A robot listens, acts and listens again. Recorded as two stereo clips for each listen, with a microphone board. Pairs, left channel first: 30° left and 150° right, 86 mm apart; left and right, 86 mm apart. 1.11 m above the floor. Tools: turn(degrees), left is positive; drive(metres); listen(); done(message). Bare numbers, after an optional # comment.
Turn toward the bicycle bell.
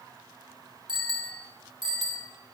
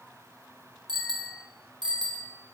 # The bicycle bell: 120° right.
turn(-120)
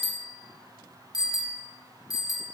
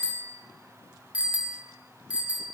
# The bicycle bell is now 15° right.
turn(-15)
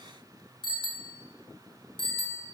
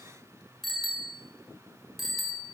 done("Found it: a bicycle bell, straight ahead.")